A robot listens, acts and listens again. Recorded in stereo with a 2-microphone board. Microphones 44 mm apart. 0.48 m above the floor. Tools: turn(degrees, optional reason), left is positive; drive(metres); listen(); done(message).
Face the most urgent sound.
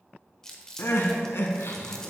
turn(degrees=65, reason="The crying: about 65° left or 115° left.")
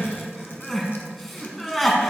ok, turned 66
done("Found it: crying, straight ahead.")